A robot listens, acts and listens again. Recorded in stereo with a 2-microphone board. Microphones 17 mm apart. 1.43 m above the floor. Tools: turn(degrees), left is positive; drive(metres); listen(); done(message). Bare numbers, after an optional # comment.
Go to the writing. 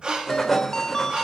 turn(30)
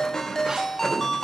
# So it is at 145° left.
turn(145)
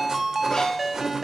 listen()
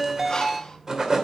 # The writing is now 35° right.
turn(-35)
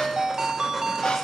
listen()
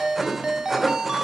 drive(1.0)
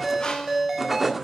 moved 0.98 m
drive(1.0)
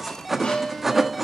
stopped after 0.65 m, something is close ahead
# The writing is now 10° right.
turn(-10)
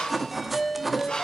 done("Arrived at the writing, straight ahead.")